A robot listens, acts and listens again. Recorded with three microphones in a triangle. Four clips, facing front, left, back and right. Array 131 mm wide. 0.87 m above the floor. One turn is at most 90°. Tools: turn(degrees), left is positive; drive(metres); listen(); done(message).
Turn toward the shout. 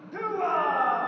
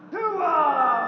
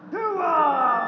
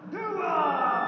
turn(degrees=90)
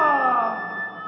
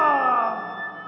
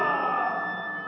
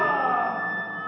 turn(degrees=45)
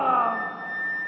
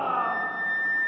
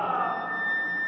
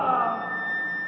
done("Facing the shout, 2 to 4 m away.")